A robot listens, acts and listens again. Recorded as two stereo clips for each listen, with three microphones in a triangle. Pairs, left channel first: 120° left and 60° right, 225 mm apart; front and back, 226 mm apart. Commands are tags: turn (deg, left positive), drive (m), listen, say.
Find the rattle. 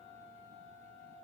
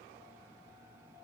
<listen/>
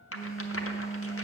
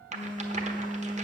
<turn deg="125"/>
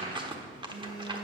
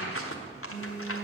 <turn deg="10"/>
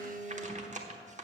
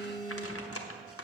<say>Found it: a rattle, straight ahead, 1 to 2 m away.</say>